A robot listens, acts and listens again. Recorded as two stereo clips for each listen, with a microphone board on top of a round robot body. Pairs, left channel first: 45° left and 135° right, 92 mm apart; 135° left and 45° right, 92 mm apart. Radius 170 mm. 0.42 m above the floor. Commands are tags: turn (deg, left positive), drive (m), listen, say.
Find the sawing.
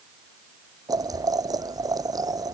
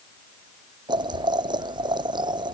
<listen/>
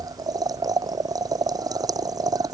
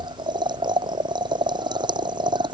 <listen/>
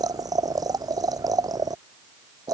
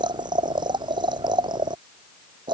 <say>I can't make out sawing to turn to.</say>